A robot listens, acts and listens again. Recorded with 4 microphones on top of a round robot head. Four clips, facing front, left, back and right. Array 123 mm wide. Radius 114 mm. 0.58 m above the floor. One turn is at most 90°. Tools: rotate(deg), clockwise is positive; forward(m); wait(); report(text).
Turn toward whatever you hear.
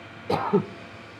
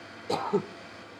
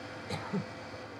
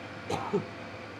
rotate(-20)
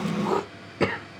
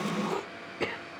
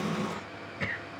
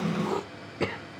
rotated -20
report("Facing the throat clearing.")